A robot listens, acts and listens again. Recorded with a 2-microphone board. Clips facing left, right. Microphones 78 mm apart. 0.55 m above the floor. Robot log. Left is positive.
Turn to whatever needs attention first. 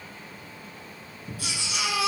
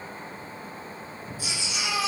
note: The baby crying: about 70° left or 110° left.
cmd yaw +70
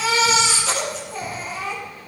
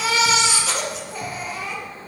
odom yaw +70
end: Facing the baby crying.